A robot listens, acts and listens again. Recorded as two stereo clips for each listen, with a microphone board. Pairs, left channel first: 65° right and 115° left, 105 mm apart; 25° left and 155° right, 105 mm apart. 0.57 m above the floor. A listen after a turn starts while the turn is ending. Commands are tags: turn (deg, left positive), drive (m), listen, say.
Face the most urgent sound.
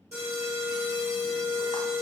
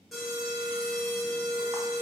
<turn deg="115"/>
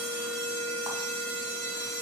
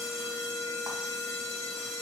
<turn deg="10"/>
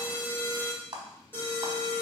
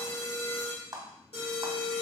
<say>Found it: an alarm, straight ahead, 1 to 2 m away.</say>